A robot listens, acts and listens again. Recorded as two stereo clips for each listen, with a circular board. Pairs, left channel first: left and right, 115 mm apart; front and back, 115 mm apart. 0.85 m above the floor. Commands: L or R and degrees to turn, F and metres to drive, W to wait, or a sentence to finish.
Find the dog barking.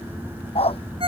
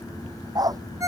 L125
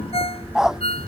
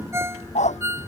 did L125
Facing the dog barking.